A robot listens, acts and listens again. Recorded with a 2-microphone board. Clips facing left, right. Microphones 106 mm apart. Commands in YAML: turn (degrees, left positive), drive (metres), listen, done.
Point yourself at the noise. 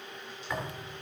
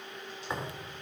turn: -25
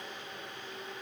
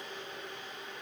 listen: true
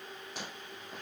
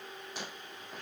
done: "I heard a thud, but can't make it out now. It was about straight ahead or 130° right."